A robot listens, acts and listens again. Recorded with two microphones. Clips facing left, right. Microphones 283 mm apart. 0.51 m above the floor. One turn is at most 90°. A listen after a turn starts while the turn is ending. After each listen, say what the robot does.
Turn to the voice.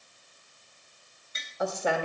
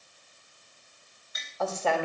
Turn 15° left.
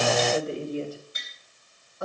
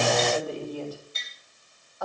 Turn 90° left.
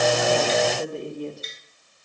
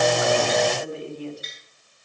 Turn 55° left.
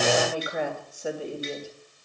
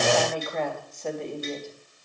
Turn 10° left.
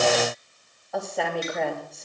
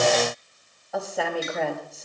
Facing the woman speaking.